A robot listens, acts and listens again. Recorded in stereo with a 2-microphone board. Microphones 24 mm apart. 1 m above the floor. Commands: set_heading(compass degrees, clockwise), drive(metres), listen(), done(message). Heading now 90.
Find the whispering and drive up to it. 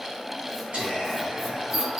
set_heading(160)
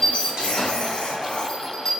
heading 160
listen()
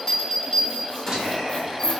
set_heading(200)
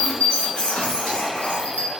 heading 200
listen()
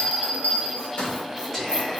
set_heading(185)
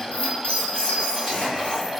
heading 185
listen()
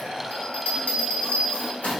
listen()
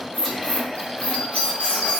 done("I heard whispering from this way, but can't make it out now. I did not reach it.")